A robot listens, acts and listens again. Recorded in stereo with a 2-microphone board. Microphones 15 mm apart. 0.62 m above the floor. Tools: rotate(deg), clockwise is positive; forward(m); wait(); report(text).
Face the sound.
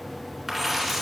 rotate(30)
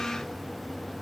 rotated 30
wait()
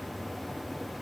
report("I heard a dropped coin, but can't make it out now. It was about 20° left or 140° right.")